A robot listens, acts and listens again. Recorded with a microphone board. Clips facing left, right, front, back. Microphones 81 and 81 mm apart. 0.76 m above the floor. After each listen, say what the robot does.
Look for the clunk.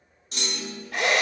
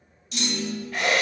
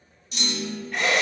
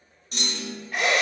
Turn 135° left.
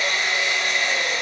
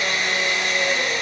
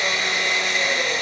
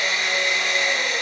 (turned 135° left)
I heard a clunk from this way, but can't make it out now.